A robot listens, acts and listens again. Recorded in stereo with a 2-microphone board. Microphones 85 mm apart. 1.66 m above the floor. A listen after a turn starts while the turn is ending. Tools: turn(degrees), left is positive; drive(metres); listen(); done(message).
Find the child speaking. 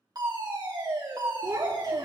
turn(degrees=-50)
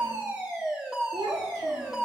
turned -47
turn(degrees=-60)
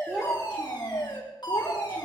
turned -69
turn(degrees=10)
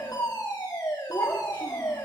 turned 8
turn(degrees=25)
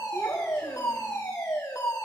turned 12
turn(degrees=15)
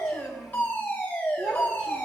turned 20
done("Found it: a child speaking, straight ahead, 2 to 4 m away.")